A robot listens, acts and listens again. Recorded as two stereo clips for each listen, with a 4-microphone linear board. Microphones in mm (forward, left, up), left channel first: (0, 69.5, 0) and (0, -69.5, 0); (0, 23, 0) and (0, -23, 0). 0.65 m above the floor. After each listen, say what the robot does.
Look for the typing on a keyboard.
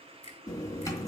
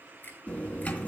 Turn 25° left.
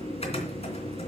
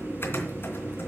Turn 130° left.
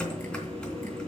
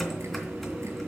Found it: typing on a keyboard, straight ahead, 2 to 4 m away.